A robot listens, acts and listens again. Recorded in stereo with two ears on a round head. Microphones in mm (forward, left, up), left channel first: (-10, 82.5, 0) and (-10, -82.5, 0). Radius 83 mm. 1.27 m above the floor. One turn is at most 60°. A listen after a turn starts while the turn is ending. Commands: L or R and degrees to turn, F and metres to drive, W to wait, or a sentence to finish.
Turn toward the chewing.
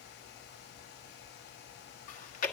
L45
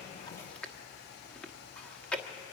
Facing the chewing, 1 to 2 m away.